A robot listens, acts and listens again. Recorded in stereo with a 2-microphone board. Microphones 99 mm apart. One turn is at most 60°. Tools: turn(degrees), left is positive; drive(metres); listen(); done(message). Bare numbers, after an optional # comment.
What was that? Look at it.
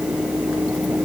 listen()
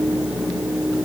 listen()
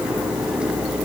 done("I can't make out anything.")